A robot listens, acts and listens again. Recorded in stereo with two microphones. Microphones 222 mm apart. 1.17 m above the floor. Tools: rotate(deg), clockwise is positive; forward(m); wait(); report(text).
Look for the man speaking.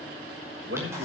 rotate(70)
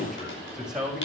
report("Facing the man speaking, over 4 m away.")